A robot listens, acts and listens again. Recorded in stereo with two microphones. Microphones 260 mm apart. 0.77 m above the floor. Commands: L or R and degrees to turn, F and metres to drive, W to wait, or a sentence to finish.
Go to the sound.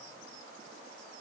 W
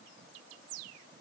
W
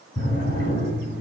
L90
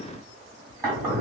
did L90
R10
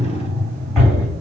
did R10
F1.0
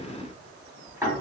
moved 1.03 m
R10
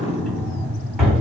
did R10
F1.0
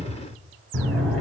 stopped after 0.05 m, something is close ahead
Arrived at the drawer, straight ahead.